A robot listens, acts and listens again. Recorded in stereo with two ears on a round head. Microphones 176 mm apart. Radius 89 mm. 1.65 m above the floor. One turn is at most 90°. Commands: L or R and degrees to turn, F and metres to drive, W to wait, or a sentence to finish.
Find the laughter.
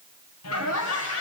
L90
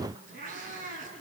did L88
W
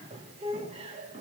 R30
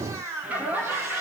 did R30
R10
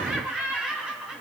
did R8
Facing the laughter, 2 to 4 m away.